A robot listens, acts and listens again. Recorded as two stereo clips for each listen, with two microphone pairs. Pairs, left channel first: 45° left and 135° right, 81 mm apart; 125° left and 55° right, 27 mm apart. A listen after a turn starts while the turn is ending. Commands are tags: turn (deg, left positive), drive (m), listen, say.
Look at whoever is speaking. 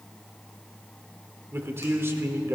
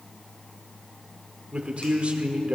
<turn deg="-80"/>
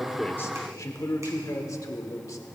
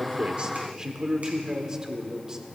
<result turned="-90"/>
<turn deg="10"/>
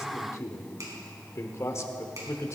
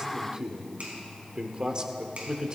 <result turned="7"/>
<say>Found it: a man speaking, straight ahead.</say>